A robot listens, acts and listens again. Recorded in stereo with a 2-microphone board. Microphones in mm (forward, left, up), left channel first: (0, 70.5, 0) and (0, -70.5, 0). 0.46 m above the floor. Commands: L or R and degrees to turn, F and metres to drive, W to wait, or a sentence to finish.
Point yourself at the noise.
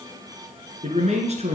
R50
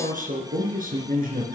R80
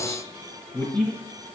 Found it: a man speaking, straight ahead, over 4 m away.